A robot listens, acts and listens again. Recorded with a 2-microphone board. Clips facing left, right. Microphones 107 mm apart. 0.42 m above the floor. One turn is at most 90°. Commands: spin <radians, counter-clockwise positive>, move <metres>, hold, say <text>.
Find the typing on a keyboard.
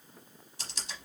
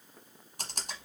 spin -0.87
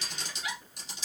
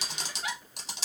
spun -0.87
spin -1.40
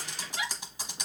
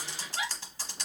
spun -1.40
spin 0.26
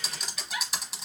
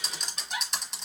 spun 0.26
say Found it: typing on a keyboard, straight ahead.